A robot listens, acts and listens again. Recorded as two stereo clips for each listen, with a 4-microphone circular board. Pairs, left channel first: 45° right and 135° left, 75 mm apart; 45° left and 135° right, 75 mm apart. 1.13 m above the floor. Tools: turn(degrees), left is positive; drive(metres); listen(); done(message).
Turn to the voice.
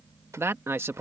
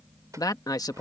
turn(degrees=80)
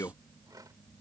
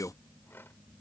done("Facing the man speaking.")